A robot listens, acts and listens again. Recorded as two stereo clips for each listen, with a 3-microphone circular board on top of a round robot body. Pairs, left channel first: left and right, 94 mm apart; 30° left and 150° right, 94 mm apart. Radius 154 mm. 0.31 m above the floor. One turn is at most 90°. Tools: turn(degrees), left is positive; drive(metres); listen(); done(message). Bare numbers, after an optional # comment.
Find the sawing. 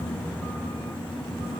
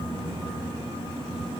listen()
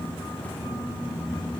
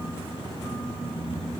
listen()
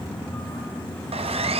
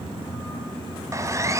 # The sawing: 90° right.
turn(-90)
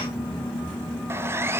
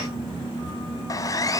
# The sawing is now 25° right.
turn(-25)
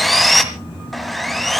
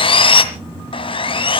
done("Facing the sawing, 1 to 2 m away.")